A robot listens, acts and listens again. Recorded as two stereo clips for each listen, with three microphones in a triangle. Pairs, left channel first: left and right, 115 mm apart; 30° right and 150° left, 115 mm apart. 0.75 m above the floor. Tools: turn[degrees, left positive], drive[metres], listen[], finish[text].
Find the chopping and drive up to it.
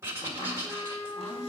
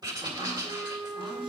Thought: The chopping: 110° left.
Action: turn[110]
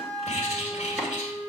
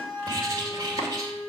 Action: listen[]
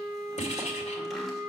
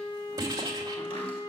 Action: listen[]
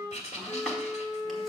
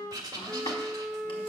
Action: finish[Facing where the chopping came from. I can't hear it now. I did not reach it.]